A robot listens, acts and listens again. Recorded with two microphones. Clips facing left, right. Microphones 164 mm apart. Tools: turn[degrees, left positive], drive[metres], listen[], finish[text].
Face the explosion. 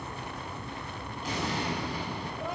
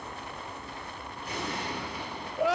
Action: turn[90]
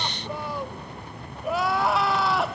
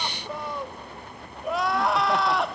Action: finish[I heard an explosion from this way, but can't make it out now.]